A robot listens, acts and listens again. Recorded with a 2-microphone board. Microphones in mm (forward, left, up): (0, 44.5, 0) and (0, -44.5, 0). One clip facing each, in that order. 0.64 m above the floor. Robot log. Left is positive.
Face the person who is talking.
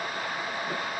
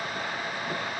cmd idle
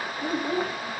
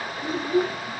note: The child speaking: about 50° left or 130° left.
cmd yaw +50
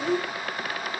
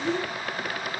note: So it is at 70° left.
cmd yaw +70
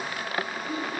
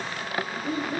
note: The child speaking is now 35° right.
cmd yaw -35
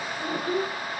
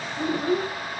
note: The child speaking is now 25° right.
cmd yaw -25
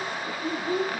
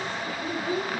note: The child speaking is now 10° right.
cmd yaw -10
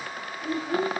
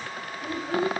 end: Facing the child speaking, 2 to 4 m away.